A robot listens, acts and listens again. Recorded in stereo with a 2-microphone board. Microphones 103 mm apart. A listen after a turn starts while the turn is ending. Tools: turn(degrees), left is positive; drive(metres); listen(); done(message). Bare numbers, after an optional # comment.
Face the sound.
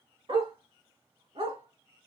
# The dog barking: about 70° right or 110° right.
turn(-70)
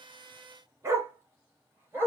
# So it is at 20° right.
turn(-20)
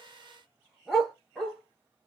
done("Found it: a dog barking, straight ahead.")